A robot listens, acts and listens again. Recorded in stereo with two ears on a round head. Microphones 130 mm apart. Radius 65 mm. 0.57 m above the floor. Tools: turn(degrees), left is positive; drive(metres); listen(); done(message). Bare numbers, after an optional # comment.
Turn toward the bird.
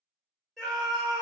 listen()
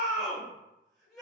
listen()
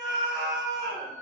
turn(-90)
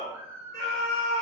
# So it is at 15° right.
turn(-15)
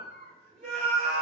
done("Facing the bird.")